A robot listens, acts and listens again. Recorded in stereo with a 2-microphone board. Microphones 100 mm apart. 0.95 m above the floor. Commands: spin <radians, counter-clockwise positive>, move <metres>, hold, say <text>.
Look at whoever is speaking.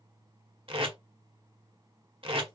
hold
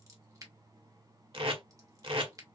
hold
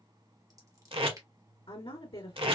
spin 1.05
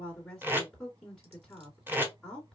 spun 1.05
say Found it: a woman speaking, straight ahead, 2 to 4 m away.